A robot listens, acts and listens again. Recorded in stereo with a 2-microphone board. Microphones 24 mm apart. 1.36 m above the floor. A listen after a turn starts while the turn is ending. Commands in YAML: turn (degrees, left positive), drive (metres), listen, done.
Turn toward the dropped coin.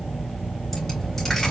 turn: 30
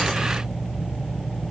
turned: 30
listen: true
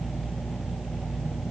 done: "I heard a dropped coin, but can't make it out now. It was about 20° right or 140° left."